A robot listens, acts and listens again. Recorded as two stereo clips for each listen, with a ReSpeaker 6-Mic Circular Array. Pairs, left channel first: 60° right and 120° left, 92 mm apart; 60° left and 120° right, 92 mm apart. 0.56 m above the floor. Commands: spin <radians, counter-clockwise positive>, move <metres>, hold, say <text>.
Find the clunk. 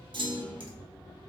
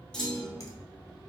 spin 2.44
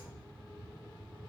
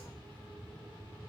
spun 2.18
spin 0.26
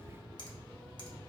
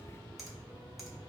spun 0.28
say Facing where the clunk came from. I can't hear it now.